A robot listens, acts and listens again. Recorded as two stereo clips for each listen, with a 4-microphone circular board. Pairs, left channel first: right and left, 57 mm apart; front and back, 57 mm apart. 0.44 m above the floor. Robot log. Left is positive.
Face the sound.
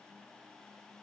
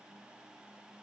cmd idle
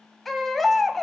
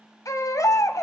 end: Found it: a baby crying, straight ahead, 1 to 2 m away.